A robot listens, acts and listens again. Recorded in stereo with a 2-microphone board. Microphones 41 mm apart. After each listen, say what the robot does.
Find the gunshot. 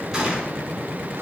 Turn 30° right.
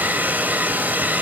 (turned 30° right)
Keep listening.
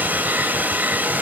I heard a gunshot, but can't make it out now. It was about 15° left or 135° right.